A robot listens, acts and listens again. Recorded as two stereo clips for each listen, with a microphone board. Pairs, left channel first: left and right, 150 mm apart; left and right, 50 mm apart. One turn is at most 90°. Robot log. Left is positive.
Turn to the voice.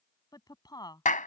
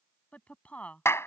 note: The woman speaking: about 25° left or 155° left.
cmd yaw +25
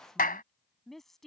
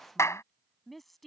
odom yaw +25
end: Found it: a woman speaking, straight ahead.